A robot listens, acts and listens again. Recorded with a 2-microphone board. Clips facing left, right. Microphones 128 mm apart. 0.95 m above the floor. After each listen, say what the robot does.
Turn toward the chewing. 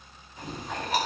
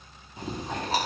Turn 35° right.
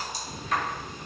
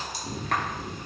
Turn 110° right.
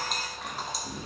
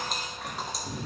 Found it: chewing, straight ahead.